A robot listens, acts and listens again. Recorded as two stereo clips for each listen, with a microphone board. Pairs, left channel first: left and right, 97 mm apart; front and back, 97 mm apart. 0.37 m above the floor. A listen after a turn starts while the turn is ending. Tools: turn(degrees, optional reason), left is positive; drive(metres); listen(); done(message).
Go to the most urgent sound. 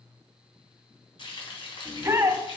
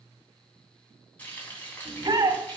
turn(degrees=-150, reason="The shout: 150° right.")
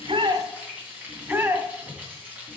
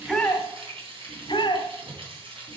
turn(degrees=-30, reason="The shout is now 30° right.")
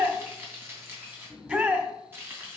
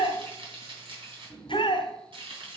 turn(degrees=-20, reason="The shout is now 20° right.")
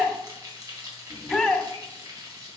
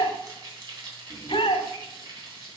drive(metres=1.0)
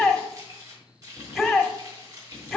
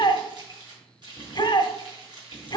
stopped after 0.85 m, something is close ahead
done("I am next to the shout.")